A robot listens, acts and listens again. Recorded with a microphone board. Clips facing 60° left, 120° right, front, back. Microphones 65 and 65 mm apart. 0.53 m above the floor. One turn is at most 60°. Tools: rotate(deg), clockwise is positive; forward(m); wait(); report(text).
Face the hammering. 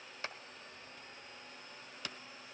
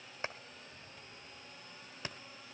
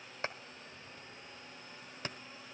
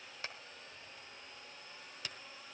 rotate(55)
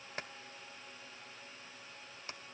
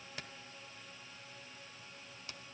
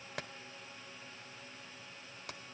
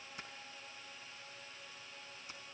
report("Facing the hammering.")